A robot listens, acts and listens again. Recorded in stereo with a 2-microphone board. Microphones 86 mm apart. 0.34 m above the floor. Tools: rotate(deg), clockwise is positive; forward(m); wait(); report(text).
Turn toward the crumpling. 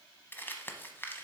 rotate(-25)
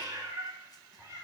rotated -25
wait()
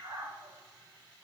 wait()
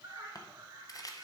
rotate(-135)
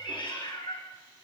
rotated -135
wait()
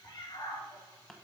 rotate(-10)
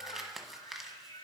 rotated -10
report("Facing the crumpling.")